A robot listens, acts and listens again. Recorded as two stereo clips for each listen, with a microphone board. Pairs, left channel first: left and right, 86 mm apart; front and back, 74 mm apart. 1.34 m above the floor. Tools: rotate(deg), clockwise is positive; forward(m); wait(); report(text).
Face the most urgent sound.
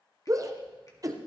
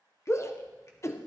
rotate(45)
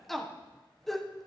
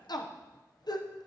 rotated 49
report("Facing the shout.")